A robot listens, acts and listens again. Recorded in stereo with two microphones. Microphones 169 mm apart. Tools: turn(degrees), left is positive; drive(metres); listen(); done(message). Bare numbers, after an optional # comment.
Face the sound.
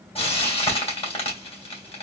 # The frying: about 35° left or 145° left.
turn(35)
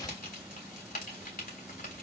# So it is at 105° left.
turn(105)
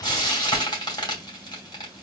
# The frying is now 25° left.
turn(25)
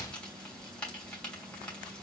done("Found it: frying, straight ahead.")